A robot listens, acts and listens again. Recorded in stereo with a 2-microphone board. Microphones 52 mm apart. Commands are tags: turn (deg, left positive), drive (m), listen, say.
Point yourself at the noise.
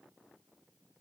<listen/>
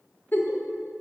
<turn deg="40"/>
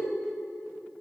<listen/>
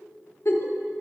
<turn deg="90"/>
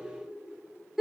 <say>Found it: a giggle, straight ahead.</say>